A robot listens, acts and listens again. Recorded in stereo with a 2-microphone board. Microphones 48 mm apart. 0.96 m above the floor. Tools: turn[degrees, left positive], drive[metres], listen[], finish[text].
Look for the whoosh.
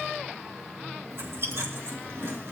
Action: listen[]
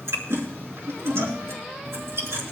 Action: listen[]
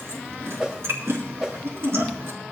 Thought: The whoosh: about 15° right or 165° right.
Action: turn[-15]
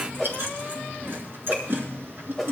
Action: finish[Found it: a whoosh, straight ahead.]